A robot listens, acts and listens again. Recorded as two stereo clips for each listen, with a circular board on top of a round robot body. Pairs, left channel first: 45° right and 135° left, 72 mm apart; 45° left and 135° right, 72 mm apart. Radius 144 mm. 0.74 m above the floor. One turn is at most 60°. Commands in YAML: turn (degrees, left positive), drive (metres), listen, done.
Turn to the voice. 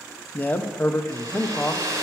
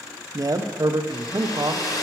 turn: -60
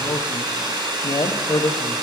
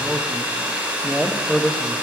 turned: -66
turn: -45
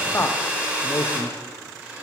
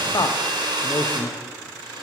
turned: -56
turn: 10
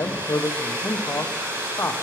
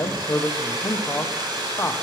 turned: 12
done: "Facing the man speaking."